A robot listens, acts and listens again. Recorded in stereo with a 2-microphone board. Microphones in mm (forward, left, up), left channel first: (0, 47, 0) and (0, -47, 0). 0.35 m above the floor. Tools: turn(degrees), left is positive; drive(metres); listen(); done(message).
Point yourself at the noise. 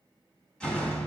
turn(degrees=30)
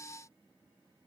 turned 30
listen()
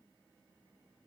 done("I heard a door slam, but can't make it out now. It was about 20° right or 140° left.")